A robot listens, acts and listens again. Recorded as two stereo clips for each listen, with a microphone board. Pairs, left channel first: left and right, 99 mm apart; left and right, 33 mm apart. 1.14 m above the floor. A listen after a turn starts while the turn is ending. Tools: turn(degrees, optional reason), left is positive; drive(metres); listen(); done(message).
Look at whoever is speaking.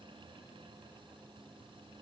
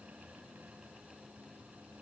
listen()
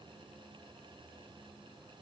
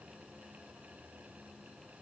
listen()
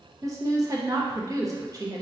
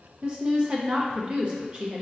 turn(degrees=-35, reason="The woman speaking: about 35° right or 145° right.")
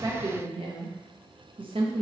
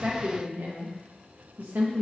turn(degrees=-110, reason="So it is at 110° right.")
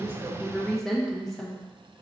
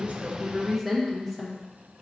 done("Found it: a woman speaking, straight ahead, under 1 m away.")